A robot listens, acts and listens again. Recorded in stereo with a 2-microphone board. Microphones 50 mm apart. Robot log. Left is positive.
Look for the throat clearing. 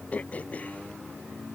note: The throat clearing: about 30° left or 150° left.
cmd yaw +30
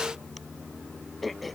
end: Found it: throat clearing, straight ahead.